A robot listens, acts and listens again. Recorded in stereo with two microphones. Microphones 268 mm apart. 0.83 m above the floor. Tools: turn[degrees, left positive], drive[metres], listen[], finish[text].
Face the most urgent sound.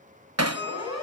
Action: turn[90]
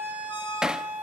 Action: finish[Found it: a siren, straight ahead.]